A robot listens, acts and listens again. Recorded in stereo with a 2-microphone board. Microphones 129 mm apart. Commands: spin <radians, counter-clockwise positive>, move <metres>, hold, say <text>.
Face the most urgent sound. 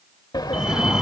spin -0.52
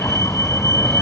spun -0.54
spin 0.44
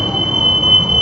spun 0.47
say Found it: a fire alarm, straight ahead.